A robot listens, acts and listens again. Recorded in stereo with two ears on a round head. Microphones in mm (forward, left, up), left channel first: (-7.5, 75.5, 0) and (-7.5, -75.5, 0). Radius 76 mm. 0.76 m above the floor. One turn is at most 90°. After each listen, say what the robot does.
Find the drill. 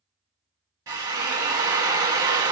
Turn 25° right.
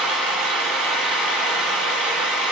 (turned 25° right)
Found it: a drill, straight ahead, 1 to 2 m away.